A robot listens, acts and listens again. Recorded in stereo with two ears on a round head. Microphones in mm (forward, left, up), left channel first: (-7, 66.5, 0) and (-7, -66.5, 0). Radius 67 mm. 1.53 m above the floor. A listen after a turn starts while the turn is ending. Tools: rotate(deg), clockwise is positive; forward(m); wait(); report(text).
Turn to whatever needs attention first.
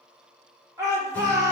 rotate(25)
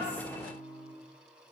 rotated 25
wait()
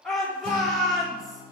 report("Found it: a shout, straight ahead.")